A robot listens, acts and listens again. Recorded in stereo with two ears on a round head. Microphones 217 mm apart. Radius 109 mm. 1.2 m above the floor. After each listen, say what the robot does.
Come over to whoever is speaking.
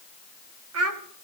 Turn 65° right.
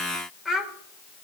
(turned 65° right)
Drive 1.0 m forward.
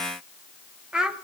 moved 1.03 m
Drive 1.0 m forward.
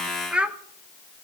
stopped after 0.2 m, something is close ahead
Arrived at the child speaking, straight ahead.